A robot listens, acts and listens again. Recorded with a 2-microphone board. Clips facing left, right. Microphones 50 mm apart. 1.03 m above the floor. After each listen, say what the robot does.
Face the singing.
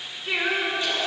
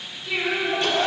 Turn 50° left.
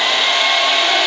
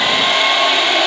Keep listening.
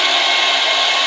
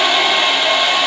Keep listening.
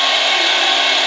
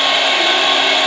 I heard singing, but can't make it out now. It was about straight ahead or 80° left.